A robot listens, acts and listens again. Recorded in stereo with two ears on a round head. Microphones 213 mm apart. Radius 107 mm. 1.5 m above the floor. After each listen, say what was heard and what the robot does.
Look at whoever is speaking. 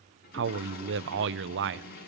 The man speaking: about 50° right or 130° right. Turn 50° right.
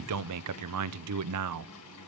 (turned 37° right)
So it is at 90° right. Turn 90° right.
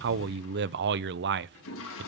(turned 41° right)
The man speaking is now 50° right. Turn 50° right.
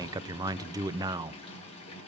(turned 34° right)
The man speaking is now 15° right. Turn 15° right.
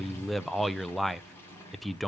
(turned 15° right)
Facing the man speaking.